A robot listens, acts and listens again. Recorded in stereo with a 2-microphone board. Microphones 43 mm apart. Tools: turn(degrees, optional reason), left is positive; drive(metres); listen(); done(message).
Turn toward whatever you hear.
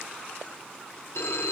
turn(degrees=90)
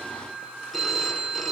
done("Found it: a phone ringing, straight ahead.")